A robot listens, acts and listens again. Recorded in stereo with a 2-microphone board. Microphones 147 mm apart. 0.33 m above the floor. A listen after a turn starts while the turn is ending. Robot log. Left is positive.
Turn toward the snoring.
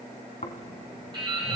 note: The snoring: about 60° left or 120° left.
cmd yaw +60
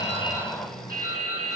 end: Found it: snoring, straight ahead.